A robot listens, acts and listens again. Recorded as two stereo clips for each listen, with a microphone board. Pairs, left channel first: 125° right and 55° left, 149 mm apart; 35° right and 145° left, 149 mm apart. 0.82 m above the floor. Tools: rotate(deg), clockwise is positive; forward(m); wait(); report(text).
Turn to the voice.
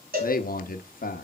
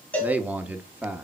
rotate(135)
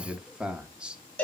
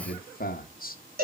rotate(30)
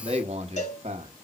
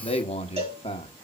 rotate(-15)
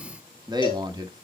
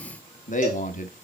report("Found it: a man speaking, straight ahead, 1 to 2 m away.")